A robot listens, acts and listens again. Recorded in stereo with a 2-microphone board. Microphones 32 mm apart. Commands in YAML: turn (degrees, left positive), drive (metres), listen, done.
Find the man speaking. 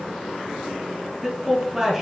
turn: 30
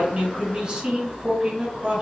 turn: -30
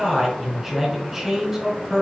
done: "Found it: a man speaking, straight ahead."